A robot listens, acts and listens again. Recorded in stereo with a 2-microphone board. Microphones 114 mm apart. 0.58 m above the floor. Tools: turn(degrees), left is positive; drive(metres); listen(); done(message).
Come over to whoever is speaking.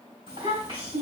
turn(degrees=-45)
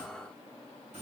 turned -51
listen()
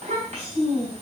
turn(degrees=-80)
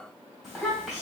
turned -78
drive(metres=1.0)
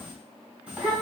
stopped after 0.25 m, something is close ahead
turn(degrees=-10)
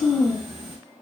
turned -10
done("Blocked. The child speaking is further on, straight ahead.")